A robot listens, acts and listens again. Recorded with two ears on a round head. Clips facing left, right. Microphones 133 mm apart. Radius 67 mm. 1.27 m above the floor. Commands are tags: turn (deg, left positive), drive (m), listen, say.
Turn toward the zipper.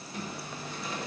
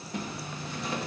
<turn deg="-55"/>
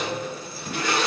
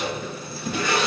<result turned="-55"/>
<turn deg="-65"/>
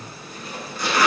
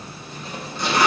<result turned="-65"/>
<turn deg="-20"/>
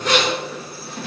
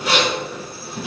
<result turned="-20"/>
<say>Found it: a zipper, straight ahead.</say>